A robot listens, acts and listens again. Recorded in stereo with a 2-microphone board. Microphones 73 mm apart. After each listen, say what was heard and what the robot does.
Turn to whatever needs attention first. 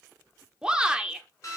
Turn 30° right.
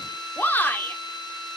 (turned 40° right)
So it is at 30° left. Turn 30° left.
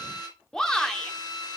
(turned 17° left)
The shout is now 10° left. Turn 10° left.
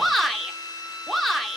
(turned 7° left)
Found it: a shout, straight ahead, 1 to 2 m away.